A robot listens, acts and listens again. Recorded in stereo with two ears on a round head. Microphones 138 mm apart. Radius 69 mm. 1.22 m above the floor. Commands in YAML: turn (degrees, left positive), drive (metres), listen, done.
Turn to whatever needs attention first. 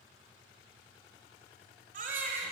turn: -55
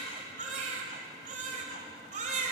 turn: -55
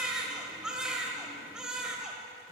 done: "Facing the baby crying."